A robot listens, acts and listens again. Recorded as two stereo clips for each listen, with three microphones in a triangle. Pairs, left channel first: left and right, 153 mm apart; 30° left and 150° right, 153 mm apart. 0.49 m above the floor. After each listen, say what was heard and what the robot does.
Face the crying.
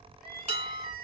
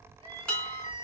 The crying: 90° right. Turn 90° right.
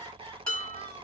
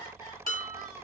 The crying is now 30° right. Turn 30° right.
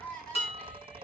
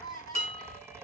Found it: crying, straight ahead.